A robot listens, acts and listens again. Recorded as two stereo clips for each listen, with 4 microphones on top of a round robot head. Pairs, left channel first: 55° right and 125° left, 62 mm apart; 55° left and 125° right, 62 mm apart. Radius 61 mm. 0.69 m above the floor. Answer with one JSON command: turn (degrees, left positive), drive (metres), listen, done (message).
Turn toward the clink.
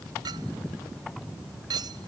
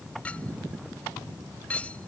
{"turn": 125}
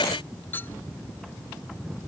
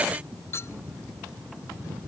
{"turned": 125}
{"done": "Found it: a clink, straight ahead."}